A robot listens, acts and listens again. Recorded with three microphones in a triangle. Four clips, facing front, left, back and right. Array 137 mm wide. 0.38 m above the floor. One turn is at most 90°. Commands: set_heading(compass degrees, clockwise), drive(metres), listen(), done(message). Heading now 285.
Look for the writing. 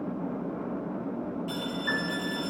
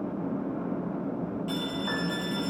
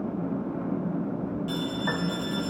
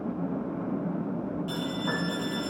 listen()
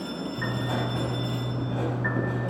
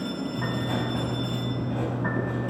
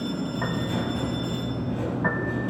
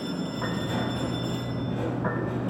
set_heading(240)
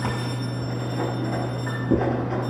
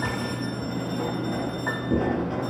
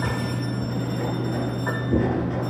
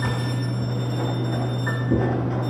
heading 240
done("Facing the writing, over 4 m away.")